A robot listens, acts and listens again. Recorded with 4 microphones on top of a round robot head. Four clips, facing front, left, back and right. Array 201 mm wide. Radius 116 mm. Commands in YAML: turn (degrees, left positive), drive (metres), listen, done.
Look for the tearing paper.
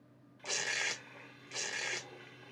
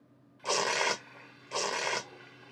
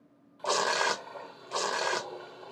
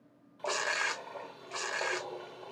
turn: 145
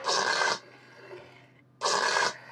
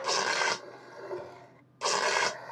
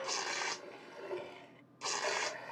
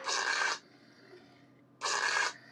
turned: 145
turn: 35
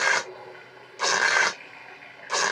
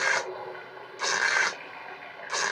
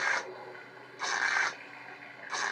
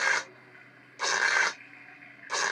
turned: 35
done: "Found it: tearing paper, straight ahead."